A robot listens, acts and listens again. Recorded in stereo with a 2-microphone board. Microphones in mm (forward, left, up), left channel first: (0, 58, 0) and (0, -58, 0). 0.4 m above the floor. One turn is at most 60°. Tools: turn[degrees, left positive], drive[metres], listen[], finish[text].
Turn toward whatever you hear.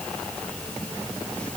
Action: listen[]
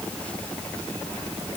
Action: listen[]
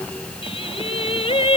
Thought: The singing: about 55° left or 125° left.
Action: turn[55]
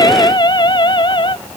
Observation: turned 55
Thought: So it is at 45° left.
Action: turn[45]
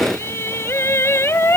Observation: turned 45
Thought: The singing is now 20° left.
Action: turn[20]
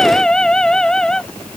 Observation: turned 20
Action: finish[Found it: singing, straight ahead.]